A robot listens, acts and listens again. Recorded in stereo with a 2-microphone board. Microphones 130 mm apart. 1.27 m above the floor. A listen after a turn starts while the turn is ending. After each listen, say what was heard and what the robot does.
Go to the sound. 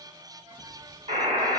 The buzzer: about 55° right or 125° right. Turn 55° right.
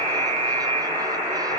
So it is at 55° right. Turn 55° right.
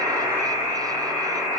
Drive 1.0 m forward.
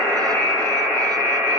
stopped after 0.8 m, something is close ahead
Arrived at the buzzer, straight ahead.